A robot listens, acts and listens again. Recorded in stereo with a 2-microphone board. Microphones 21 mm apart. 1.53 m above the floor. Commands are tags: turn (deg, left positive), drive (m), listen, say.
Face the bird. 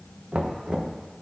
<listen/>
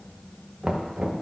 <listen/>
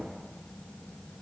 <say>I can't make out a bird to turn to.</say>